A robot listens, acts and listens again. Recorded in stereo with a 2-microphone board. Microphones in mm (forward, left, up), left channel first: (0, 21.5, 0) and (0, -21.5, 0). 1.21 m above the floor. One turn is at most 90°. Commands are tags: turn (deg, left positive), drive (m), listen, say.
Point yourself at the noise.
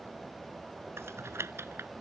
<turn deg="-90"/>
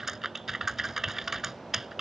<turn deg="-10"/>
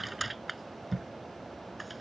<say>Facing the typing on a keyboard.</say>